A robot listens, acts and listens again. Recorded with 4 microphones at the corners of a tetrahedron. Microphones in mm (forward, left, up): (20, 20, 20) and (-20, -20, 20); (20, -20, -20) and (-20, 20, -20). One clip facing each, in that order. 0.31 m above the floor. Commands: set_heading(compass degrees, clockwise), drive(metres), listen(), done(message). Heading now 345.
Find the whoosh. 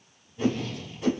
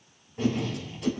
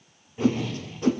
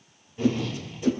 set_heading(5)
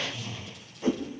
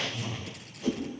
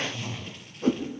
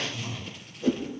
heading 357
set_heading(7)
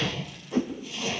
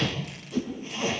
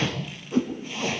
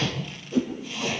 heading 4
done("Found it: a whoosh, straight ahead, 2 to 4 m away.")